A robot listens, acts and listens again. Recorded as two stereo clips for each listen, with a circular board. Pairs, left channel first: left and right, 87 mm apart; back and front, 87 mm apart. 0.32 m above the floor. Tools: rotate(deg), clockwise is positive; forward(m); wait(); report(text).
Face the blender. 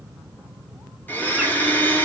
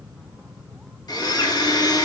rotate(-155)
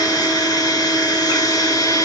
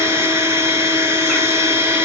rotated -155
rotate(-55)
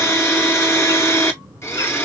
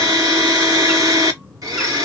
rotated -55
rotate(-35)
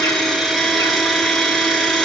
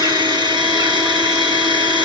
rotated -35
report("Found it: a blender, straight ahead, under 1 m away.")